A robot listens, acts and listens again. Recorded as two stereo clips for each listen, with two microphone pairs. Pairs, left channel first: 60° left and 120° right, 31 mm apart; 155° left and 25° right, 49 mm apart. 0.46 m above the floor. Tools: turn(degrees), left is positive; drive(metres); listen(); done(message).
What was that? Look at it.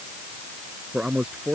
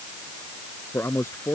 turn(degrees=-175)
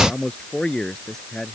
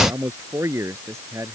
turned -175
turn(degrees=-10)
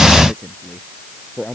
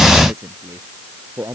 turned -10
done("Found it: a man speaking, straight ahead.")